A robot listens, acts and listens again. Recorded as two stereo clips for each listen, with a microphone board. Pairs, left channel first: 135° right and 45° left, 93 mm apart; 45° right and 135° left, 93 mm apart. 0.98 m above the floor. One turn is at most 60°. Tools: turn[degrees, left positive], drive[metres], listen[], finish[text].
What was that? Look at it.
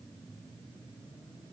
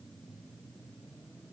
Action: listen[]
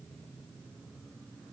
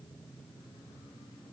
Action: listen[]
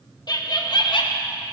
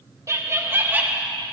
Thought: The laughter: 150° right.
Action: turn[-60]
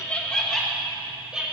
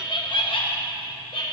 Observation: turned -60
Thought: The laughter is now 35° right.
Action: turn[-35]
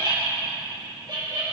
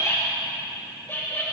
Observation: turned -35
Thought: The laughter is now 20° left.
Action: turn[20]
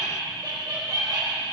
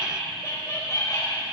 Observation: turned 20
Action: finish[Facing the laughter.]